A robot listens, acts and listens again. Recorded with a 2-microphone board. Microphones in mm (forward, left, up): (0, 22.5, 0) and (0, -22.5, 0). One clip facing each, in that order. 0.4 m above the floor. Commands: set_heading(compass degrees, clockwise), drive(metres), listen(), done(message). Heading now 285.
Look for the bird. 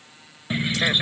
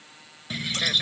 set_heading(260)
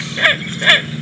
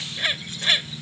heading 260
set_heading(135)
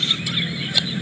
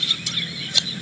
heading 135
set_heading(115)
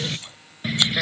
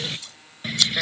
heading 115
done("Found it: a bird, straight ahead.")